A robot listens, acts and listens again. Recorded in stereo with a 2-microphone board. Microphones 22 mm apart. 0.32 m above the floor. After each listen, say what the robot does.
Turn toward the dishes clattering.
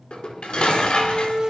Turn 55° left.
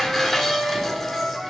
Facing the dishes clattering.